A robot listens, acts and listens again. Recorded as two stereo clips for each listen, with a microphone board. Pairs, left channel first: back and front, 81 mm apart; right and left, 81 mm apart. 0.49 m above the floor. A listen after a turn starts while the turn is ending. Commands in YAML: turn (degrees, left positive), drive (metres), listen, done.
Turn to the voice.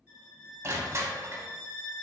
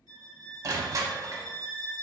listen: true
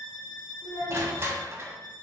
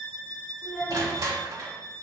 done: "Found it: a child speaking, straight ahead, under 1 m away."